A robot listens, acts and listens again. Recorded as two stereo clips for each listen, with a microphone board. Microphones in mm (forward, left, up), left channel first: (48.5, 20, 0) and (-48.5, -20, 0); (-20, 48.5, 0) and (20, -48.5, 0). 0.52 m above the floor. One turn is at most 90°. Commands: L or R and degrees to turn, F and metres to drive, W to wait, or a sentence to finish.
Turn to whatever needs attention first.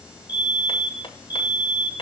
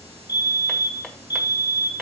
L65
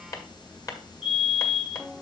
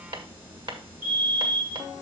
Facing the fire alarm.